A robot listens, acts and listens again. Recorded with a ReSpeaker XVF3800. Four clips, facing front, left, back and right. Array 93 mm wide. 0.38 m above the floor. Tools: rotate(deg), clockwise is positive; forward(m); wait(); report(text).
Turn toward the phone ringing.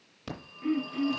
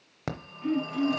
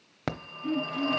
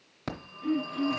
rotate(-165)
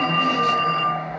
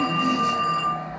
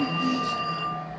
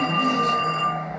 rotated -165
rotate(25)
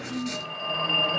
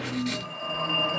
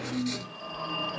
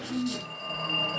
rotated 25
rotate(-25)
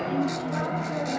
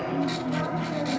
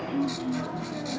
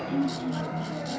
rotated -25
rotate(-20)
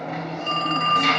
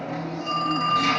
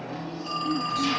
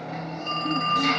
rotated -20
rotate(-10)
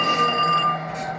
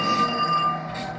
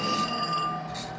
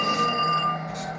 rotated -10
report("Facing the phone ringing, under 1 m away.")